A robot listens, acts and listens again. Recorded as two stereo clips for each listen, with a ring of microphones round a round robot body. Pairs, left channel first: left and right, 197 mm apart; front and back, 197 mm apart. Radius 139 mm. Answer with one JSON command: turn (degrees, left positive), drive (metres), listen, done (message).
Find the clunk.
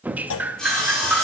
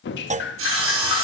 {"turn": 125}
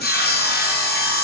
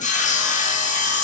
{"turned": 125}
{"done": "Facing where the clunk came from. I can't hear it now."}